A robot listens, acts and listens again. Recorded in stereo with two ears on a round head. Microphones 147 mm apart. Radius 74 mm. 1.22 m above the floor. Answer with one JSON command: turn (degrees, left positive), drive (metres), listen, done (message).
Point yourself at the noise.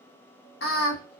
{"turn": 70}
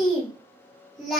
{"done": "Found it: singing, straight ahead, under 1 m away."}